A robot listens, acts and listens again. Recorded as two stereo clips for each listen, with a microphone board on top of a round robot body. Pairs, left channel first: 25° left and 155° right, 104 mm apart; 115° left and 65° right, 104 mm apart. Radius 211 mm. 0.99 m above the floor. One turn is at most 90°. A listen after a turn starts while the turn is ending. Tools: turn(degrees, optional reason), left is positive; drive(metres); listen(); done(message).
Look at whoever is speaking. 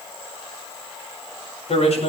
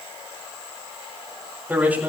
turn(degrees=10, reason="The man speaking: 10° left.")
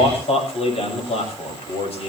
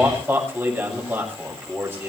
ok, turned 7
done("Facing the man speaking, over 4 m away.")